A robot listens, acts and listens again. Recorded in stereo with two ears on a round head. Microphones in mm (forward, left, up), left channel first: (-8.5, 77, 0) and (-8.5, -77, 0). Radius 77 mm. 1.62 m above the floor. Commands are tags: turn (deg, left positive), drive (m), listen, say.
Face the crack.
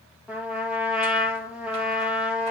<listen/>
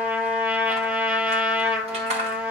<listen/>
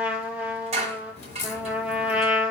<turn deg="40"/>
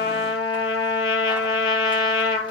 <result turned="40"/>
<listen/>
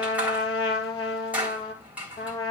<say>I heard a crack, but can't make it out now. It was about straight ahead or 100° left.</say>